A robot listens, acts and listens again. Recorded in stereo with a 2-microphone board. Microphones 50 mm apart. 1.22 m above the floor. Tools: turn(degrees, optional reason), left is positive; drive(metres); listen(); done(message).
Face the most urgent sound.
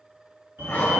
turn(degrees=-60, reason="The fire alarm: about 60° right or 120° right.")
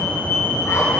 done("Found it: a fire alarm, straight ahead.")